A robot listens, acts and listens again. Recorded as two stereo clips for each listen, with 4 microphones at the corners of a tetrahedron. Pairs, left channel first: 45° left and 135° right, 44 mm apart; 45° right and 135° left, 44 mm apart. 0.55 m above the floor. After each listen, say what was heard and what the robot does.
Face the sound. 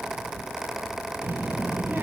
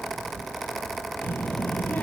The child speaking: 95° right. Turn 95° right.
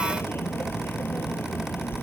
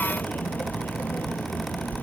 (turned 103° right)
The child speaking is now 10° left. Turn 10° left.
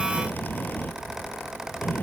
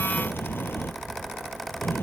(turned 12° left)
Found it: a child speaking, straight ahead.